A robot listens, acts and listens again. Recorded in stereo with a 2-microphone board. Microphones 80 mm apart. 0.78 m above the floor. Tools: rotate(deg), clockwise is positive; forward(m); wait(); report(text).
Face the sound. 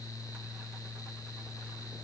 wait()
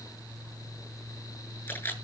rotate(-20)
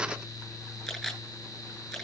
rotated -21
report("Facing the camera shutter.")